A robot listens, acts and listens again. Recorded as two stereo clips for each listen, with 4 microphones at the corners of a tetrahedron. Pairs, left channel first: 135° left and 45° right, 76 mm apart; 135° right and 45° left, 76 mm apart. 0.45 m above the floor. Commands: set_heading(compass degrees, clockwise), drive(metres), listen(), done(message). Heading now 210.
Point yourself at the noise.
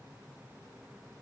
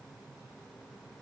listen()
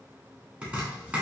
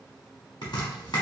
set_heading(330)
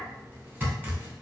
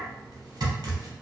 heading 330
set_heading(310)
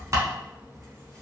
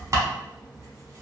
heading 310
done("Found it: chopping, straight ahead, under 1 m away.")